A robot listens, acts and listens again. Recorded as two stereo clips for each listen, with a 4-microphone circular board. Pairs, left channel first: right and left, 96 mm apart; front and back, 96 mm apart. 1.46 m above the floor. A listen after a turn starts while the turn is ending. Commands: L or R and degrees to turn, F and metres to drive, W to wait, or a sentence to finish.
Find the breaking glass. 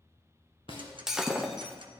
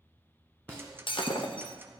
Facing the breaking glass.